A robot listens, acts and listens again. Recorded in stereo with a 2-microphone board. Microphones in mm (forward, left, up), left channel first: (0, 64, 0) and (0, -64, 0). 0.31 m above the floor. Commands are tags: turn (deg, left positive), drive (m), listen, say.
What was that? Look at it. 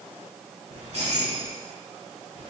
<turn deg="-45"/>
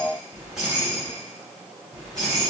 <say>Found it: keys jangling, straight ahead.</say>